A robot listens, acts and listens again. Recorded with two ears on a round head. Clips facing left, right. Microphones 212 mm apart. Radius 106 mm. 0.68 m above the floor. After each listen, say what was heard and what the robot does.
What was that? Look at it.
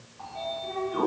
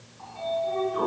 The sliding door: about 60° left or 120° left. Turn 60° left.
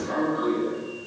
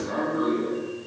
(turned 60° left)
So it is at 60° left. Turn 60° left.
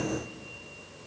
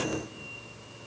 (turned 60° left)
Found it: a sliding door, straight ahead.